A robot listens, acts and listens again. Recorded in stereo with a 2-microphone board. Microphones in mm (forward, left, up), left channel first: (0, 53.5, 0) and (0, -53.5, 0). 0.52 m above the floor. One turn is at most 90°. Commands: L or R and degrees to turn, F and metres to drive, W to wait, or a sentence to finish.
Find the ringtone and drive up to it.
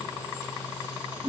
W
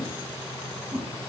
W
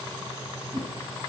I can't make out a ringtone, only a whoosh.